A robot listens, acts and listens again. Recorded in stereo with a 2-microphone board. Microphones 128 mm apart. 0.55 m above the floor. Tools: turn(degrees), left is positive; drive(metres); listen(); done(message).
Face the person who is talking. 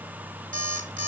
listen()
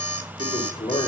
turn(degrees=35)
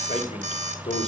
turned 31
turn(degrees=110)
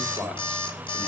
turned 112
done("Found it: a man speaking, straight ahead, 2 to 4 m away.")